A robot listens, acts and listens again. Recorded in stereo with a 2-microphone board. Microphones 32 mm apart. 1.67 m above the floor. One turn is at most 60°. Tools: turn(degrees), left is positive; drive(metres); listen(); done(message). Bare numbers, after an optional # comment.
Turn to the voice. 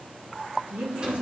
# The woman speaking: about 65° right or 115° right.
turn(-60)
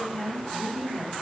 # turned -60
done("Found it: a woman speaking, straight ahead, 2 to 4 m away.")